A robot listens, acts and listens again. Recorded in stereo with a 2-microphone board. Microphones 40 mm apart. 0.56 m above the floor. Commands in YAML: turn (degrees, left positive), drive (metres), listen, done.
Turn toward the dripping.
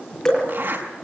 turn: 30
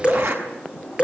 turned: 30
turn: -20
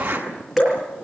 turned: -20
done: "Found it: dripping, straight ahead, over 4 m away."